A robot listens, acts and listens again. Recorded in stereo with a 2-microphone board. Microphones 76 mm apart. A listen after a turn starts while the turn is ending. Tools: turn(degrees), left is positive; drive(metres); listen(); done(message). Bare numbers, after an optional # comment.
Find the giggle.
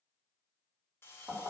listen()
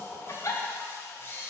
# The giggle: about 40° left or 140° left.
turn(40)
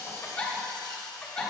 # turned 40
# So it is at 10° left.
turn(10)
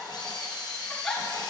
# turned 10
done("Facing the giggle, 1 to 2 m away.")